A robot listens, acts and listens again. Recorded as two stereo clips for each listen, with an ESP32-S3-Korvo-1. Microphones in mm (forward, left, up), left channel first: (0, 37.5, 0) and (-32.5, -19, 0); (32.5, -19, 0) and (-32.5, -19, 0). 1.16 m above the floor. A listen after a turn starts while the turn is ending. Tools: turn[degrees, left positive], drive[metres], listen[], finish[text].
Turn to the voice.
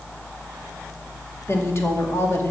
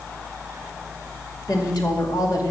Thought: The woman speaking: 10° left.
Action: turn[10]
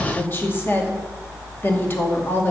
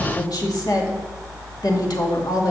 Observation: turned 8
Action: finish[Facing the woman speaking.]